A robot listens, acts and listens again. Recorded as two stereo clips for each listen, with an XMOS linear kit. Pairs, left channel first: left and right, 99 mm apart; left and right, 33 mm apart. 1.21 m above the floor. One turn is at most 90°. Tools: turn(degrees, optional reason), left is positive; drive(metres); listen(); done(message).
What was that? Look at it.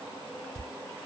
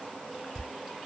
turn(degrees=30)
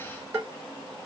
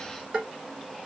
turn(degrees=-30, reason="So it is at 30° right.")
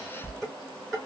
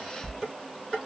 done("Facing the dishes clattering.")